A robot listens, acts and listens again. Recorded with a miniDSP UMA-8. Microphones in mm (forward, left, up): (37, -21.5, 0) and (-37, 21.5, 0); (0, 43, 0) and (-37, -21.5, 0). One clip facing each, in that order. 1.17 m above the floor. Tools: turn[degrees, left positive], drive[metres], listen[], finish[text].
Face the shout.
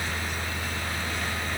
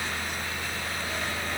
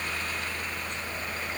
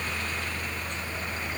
Action: listen[]
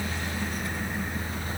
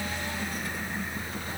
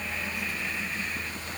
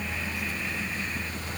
Action: listen[]
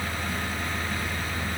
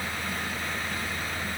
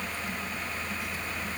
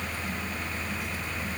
Action: finish[I can't make out a shout to turn to.]